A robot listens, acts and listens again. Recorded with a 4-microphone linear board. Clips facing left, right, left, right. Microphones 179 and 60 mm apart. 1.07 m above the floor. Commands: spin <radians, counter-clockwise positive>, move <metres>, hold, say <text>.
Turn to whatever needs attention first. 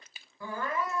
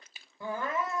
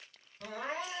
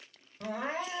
spin -0.35
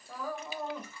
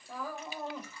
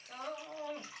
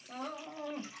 say Found it: crying, straight ahead.